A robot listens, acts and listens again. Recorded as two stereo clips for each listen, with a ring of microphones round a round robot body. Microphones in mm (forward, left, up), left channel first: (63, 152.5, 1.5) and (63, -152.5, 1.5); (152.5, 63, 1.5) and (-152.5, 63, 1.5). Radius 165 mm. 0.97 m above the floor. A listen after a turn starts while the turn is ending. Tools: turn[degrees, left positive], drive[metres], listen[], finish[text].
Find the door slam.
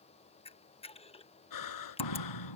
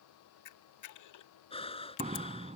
Thought: The door slam: 110° left.
Action: turn[110]
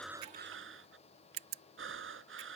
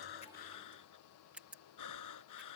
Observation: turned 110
Action: finish[Facing where the door slam came from. I can't hear it now.]